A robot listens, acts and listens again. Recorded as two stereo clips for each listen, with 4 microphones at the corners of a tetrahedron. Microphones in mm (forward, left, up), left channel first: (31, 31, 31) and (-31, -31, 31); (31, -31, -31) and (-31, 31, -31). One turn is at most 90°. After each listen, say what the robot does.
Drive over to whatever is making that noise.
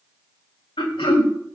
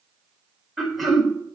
Turn 45° left.
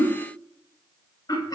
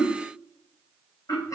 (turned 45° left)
Drive 1.0 m forward.
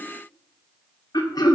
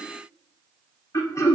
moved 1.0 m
Drive 1.0 m forward.
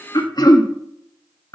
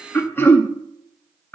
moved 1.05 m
Turn 15° left.
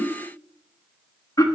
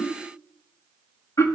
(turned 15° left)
Drive 1.0 m forward.
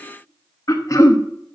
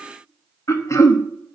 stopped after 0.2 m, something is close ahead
Arrived at the throat clearing, straight ahead.